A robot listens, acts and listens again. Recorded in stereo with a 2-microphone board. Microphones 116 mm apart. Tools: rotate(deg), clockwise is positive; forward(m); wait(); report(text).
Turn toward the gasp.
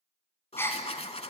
rotate(-20)
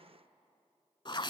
wait()
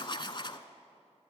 report("I heard a gasp, but can't make it out now. It was about straight ahead or 140° left.")